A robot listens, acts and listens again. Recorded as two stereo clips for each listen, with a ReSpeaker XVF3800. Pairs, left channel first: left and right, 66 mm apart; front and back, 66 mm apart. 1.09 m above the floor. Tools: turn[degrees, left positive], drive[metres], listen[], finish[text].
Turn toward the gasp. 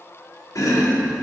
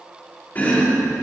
Action: listen[]
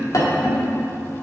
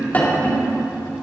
Action: listen[]
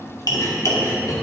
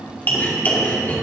Action: finish[I can't make out a gasp to turn to.]